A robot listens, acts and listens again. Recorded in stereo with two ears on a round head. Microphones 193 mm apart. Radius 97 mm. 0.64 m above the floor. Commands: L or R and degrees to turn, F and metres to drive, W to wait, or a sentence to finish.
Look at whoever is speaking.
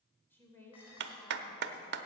L30
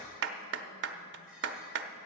W
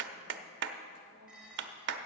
W
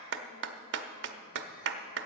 I heard a woman speaking, but can't make it out now. It was about 20° right or 140° left.